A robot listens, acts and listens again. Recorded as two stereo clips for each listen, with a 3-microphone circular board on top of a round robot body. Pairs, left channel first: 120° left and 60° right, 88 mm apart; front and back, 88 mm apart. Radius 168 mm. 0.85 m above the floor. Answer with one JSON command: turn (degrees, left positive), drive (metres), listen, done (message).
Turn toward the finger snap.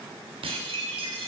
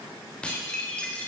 {"listen": true}
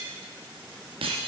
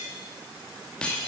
{"listen": true}
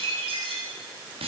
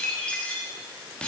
{"done": "I can't make out a finger snap to turn to."}